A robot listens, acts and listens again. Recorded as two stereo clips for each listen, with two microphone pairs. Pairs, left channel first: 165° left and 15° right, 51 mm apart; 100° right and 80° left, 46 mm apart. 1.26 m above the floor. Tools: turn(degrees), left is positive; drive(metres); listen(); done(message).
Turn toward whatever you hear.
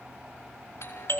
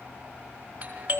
turn(degrees=145)
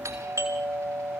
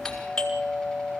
turn(degrees=-15)
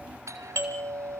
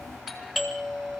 done("Found it: a doorbell, straight ahead, over 4 m away.")